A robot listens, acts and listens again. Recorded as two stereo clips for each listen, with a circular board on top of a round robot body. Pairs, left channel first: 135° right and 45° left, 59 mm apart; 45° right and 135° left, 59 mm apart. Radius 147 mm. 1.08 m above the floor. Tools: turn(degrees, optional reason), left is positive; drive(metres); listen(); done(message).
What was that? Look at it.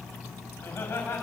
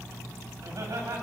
turn(degrees=170, reason="The laughter: 170° left.")
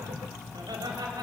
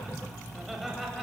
turn(degrees=45, reason="The laughter is now 45° left.")
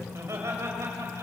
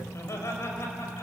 done("Found it: laughter, straight ahead, over 4 m away.")